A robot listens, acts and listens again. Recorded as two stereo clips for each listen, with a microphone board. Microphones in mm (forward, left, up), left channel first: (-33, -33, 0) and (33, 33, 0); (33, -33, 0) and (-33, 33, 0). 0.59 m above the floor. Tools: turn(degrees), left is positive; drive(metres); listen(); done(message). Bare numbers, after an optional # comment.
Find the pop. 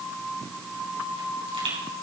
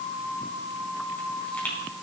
# The pop: 30° left.
turn(30)
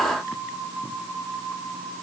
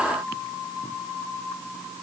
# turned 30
done("I heard a pop from this way, but can't make it out now.")